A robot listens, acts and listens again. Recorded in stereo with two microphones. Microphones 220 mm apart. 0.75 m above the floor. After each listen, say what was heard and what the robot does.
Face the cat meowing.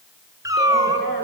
The cat meowing: about 15° right or 165° right. Turn 15° right.
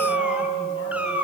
Turn 30° right.
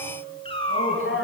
So it is at 25° left. Turn 25° left.
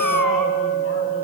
Keep listening.
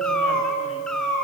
Facing the cat meowing, over 4 m away.